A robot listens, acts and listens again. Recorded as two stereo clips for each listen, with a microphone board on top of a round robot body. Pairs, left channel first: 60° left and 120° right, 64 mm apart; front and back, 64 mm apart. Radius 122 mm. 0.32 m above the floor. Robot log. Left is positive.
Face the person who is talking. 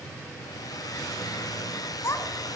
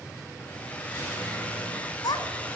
note: The child speaking: 15° left.
cmd yaw +15
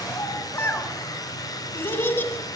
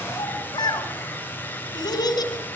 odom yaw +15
end: Facing the child speaking, 2 to 4 m away.